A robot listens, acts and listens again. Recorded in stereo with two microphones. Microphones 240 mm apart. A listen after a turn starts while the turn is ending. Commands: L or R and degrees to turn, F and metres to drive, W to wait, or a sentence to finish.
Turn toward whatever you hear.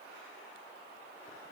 W
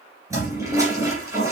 R30
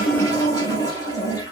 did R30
L15
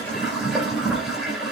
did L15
Facing the toilet flushing, 2 to 4 m away.